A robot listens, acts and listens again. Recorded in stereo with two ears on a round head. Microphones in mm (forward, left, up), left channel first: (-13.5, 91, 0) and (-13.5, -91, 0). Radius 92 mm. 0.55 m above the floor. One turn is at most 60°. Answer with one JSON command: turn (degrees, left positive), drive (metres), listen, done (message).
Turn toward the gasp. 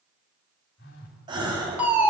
{"turn": -20}
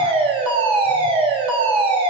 {"listen": true}
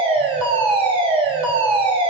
{"done": "I heard a gasp, but can't make it out now. It was about straight ahead or 140° right."}